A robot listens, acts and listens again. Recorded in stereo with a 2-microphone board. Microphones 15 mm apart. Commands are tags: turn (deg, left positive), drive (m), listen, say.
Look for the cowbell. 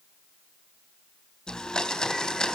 <listen/>
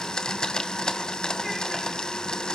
<listen/>
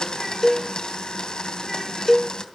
<turn deg="25"/>
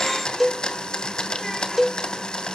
<say>Found it: a cowbell, straight ahead, under 1 m away.</say>